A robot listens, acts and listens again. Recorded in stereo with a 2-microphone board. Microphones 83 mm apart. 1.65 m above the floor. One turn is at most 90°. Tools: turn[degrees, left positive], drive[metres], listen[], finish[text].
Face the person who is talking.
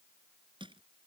Action: listen[]
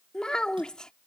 Action: turn[30]
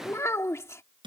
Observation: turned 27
Thought: So it is at 145° left.
Action: turn[90]
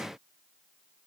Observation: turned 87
Thought: Nothing new. It was at 55° left.
Action: turn[55]
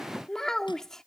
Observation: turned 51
Action: finish[Facing the child speaking.]